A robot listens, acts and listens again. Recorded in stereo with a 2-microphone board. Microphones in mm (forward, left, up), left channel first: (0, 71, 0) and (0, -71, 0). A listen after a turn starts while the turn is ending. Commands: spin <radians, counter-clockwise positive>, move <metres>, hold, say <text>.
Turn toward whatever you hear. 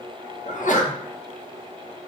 spin 1.05
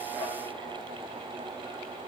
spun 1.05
hold
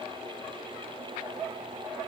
say I heard a sneeze, but can't make it out now. It was about straight ahead or 60° left.